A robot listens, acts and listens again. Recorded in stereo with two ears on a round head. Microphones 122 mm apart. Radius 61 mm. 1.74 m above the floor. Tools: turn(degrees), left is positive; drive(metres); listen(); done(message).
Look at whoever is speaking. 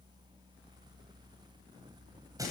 listen()
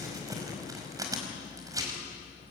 listen()
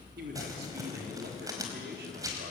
turn(degrees=-90)
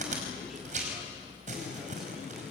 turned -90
listen()
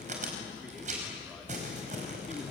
listen()
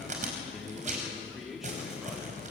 done("Facing the man speaking.")